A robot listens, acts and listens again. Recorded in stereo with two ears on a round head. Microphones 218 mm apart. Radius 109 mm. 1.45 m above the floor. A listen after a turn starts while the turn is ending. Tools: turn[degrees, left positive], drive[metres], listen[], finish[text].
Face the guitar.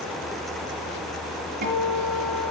Thought: The guitar: about 35° right or 145° right.
Action: turn[-35]
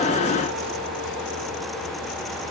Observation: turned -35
Action: listen[]
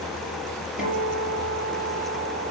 Action: finish[Found it: a guitar, straight ahead.]